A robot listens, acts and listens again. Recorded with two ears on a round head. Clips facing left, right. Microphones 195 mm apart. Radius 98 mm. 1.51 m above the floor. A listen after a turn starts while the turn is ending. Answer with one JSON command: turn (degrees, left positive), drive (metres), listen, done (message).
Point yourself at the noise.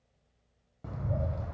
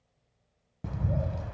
{"turn": -40}
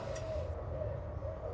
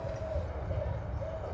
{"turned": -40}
{"turn": -100}
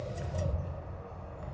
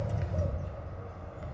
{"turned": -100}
{"turn": -20}
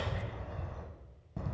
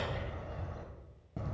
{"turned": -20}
{"done": "Found it: a bird, straight ahead."}